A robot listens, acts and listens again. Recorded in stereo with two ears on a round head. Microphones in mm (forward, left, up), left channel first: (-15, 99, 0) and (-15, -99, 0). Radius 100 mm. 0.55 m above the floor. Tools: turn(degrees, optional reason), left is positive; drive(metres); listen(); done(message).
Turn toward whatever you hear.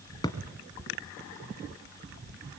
turn(degrees=20, reason="The thud: about 20° left or 160° left.")
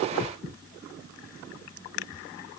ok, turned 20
listen()
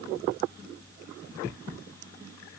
done("I heard a thud, but can't make it out now. It was about straight ahead or 140° left.")